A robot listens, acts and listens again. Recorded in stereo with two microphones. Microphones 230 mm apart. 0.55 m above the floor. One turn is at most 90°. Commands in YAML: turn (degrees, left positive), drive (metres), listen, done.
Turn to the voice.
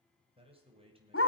turn: -25
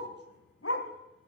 listen: true
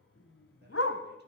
listen: true
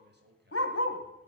turn: -90
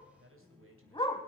turn: -70
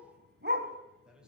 done: "Facing the man speaking."